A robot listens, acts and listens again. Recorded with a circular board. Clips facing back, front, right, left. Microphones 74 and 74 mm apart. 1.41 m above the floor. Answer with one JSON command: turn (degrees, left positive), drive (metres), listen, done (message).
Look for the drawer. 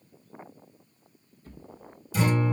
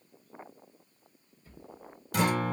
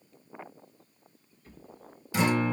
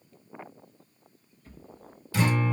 {"turn": 180}
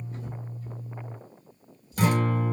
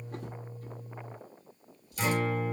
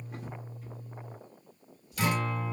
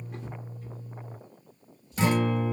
{"turn": -10}
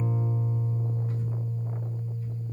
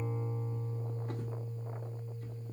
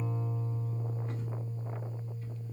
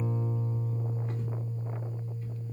{"listen": true}
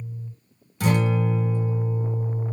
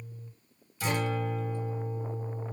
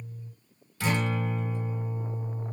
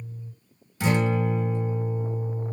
{"listen": true}
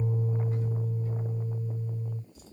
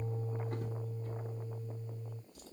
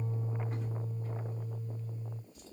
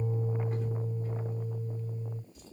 {"done": "Found it: a drawer, straight ahead."}